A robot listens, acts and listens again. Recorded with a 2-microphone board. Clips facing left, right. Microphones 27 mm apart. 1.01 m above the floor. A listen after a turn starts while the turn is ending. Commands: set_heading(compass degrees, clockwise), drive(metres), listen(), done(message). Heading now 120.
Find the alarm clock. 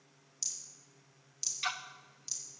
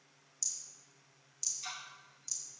listen()
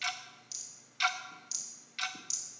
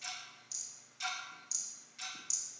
listen()
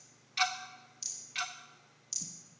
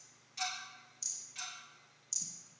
done("I can't make out an alarm clock to turn to.")